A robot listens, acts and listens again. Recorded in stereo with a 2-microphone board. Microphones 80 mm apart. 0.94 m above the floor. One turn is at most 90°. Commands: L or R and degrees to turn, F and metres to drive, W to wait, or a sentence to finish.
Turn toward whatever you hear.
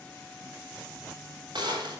R90
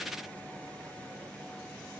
I heard a gunshot from this way, but can't make it out now.